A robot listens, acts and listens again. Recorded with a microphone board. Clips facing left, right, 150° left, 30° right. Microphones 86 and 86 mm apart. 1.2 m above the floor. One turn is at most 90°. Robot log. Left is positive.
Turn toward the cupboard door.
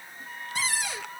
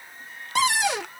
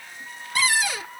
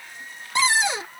note: The cupboard door: 95° right.
cmd yaw -90
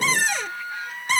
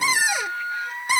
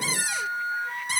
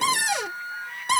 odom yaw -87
note: The cupboard door is now 10° right.
cmd yaw -10
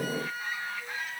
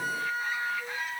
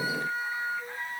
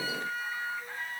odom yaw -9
cmd idle
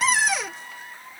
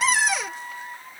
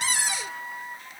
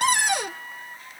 end: Facing the cupboard door.